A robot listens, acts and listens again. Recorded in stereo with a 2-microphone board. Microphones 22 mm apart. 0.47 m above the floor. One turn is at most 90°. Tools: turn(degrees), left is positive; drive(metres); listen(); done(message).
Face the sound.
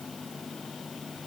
listen()
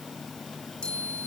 turn(degrees=75)
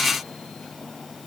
listen()
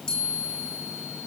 turn(degrees=30)
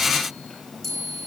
done("Found it: a chime, straight ahead.")